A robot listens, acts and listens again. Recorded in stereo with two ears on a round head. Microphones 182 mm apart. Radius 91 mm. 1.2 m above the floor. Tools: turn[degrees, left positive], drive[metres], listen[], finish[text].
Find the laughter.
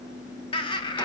Thought: The laughter: about 20° left or 160° left.
Action: turn[20]
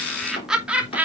Thought: So it is at 10° right.
Action: turn[-10]
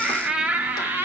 Thought: The laughter is now 10° right.
Action: turn[-10]
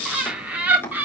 Thought: The laughter is now 10° right.
Action: turn[-10]
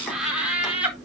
Action: finish[Facing the laughter.]